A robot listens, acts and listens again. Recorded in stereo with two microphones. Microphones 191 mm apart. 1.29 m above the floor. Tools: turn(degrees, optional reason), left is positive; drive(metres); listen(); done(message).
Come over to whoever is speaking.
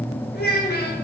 turn(degrees=50, reason="The child speaking: about 50° left or 130° left.")
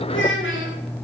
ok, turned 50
turn(degrees=75, reason="So it is at 75° left.")
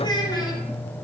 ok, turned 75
turn(degrees=20, reason="The child speaking is now 20° left.")
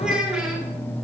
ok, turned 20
drive(metres=1.0)
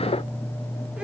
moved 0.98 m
listen()
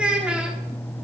drive(metres=1.0)
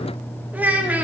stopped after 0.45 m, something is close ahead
turn(degrees=-10, reason="The child speaking is now 10° right.")
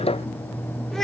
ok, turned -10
listen()
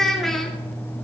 done("I am next to the child speaking.")